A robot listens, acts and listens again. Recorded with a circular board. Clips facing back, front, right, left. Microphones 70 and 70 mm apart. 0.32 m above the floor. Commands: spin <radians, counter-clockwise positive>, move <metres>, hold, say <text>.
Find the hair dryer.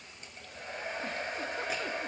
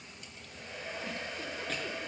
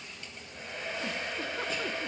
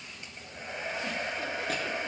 spin 2.62
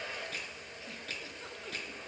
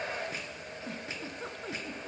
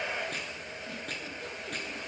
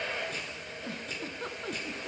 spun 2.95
spin -0.26
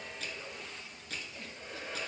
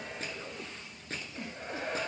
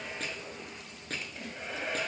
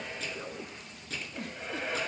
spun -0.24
say Facing the hair dryer, under 1 m away.